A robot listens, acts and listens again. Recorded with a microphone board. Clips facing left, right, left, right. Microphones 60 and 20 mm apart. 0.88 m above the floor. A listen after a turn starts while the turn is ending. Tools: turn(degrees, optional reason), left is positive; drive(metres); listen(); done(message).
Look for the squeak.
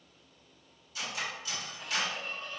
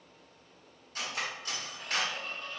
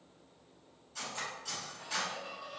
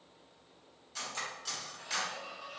turn(degrees=-65, reason="The squeak: about 65° right or 115° right.")
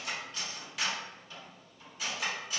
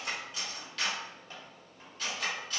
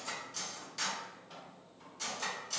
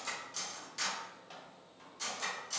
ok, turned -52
turn(degrees=-55, reason="So it is at 55° right.")
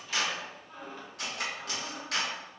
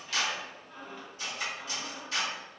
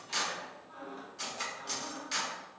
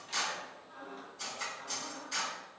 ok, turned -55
done("Found it: a squeak, straight ahead, 1 to 2 m away.")